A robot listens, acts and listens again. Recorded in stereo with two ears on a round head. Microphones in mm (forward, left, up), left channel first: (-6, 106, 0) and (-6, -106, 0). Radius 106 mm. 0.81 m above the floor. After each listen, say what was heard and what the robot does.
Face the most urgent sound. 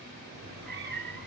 Keep listening.
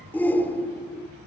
Turn 30° left.
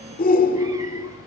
So it is at 140° left. Turn 140° left.
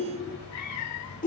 The shout is now 35° left. Turn 35° left.
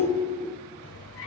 The shout is now 15° left. Turn 15° left.
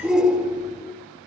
Found it: a shout, straight ahead.